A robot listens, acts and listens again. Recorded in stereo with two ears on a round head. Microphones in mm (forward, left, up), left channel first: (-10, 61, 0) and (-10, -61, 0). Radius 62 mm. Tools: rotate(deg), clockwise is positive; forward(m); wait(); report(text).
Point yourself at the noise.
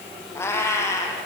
rotate(-25)
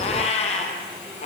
rotate(-125)
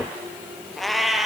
report("Found it: a cat meowing, straight ahead, 2 to 4 m away.")